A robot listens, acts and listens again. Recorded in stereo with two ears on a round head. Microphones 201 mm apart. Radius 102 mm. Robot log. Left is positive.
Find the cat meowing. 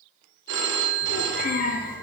note: The cat meowing: about 45° left or 135° left.
cmd yaw +45
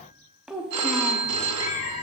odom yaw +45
note: So it is at 90° left.
cmd yaw +90
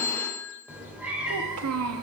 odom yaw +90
end: Facing the cat meowing, 1 to 2 m away.